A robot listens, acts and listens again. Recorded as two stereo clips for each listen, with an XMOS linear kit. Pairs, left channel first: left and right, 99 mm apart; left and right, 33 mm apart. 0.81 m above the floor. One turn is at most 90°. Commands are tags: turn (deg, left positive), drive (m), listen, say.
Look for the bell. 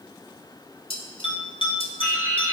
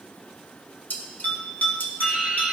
<turn deg="55"/>
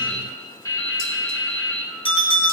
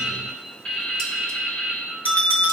<turn deg="65"/>
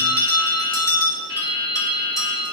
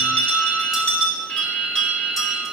<turn deg="35"/>
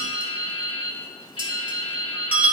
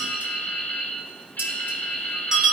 <turn deg="-15"/>
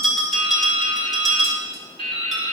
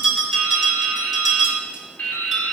<say>Facing the bell, 2 to 4 m away.</say>